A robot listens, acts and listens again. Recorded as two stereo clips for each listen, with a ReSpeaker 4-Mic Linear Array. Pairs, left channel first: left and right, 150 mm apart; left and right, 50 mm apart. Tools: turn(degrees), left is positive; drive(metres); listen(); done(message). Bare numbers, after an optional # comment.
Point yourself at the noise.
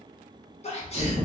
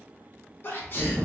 # The sneeze: about 45° left or 135° left.
turn(45)
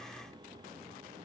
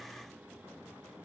listen()
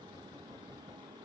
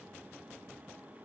done("I heard a sneeze, but can't make it out now. It was about straight ahead or 90° left.")